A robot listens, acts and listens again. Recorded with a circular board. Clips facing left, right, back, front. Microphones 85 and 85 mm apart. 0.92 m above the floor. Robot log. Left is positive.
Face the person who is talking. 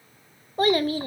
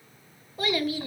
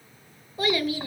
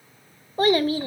note: The child speaking: 45° left.
cmd yaw +45
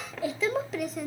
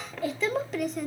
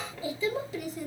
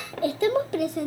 end: Found it: a child speaking, straight ahead.